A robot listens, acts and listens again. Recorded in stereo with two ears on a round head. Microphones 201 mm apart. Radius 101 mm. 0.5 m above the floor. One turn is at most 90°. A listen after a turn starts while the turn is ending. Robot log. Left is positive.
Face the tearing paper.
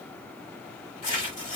note: The tearing paper: about 30° left or 150° left.
cmd yaw +30
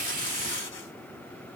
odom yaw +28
cmd idle
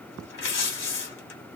note: So it is at 120° left.
cmd yaw +90
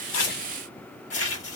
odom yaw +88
note: The tearing paper is now 35° left.
cmd yaw +35
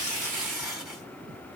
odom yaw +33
end: Facing the tearing paper, 1 to 2 m away.